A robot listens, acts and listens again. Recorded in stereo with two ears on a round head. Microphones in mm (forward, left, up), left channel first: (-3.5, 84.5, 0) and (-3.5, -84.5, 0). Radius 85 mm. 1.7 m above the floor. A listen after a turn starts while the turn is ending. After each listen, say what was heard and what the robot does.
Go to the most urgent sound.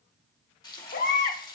The baby crying: about 45° left or 135° left. Turn 45° left.
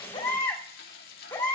So it is at 15° left. Turn 15° left.
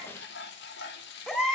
Drive 1.0 m forward.
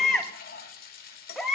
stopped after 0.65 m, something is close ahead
Arrived at the baby crying, straight ahead.